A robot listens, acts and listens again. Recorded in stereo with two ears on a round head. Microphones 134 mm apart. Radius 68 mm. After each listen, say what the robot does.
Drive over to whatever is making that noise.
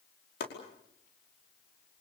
Turn 70° left.
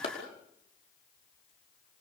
Turn 40° left.
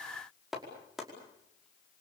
Drive 1.0 m forward.
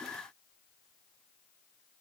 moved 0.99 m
Keep listening.
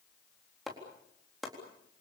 Drive 1.0 m forward.
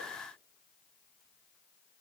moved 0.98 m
Keep listening.
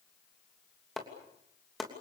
Drive 1.0 m forward.
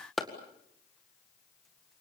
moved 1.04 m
Drive 1.0 m forward.
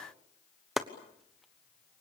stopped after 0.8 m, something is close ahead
Arrived at the chopping, straight ahead.